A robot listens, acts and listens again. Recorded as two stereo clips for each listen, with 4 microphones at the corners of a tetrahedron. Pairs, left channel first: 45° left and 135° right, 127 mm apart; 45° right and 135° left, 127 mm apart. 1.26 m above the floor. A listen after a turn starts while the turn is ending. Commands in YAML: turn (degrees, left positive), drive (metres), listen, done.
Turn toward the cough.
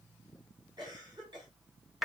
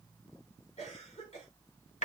turn: -80
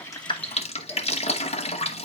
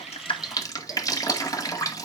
listen: true
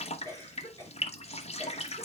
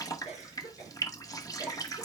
turn: -20
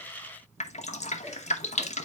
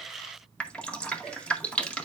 listen: true
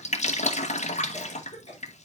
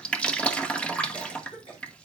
done: "Facing the cough."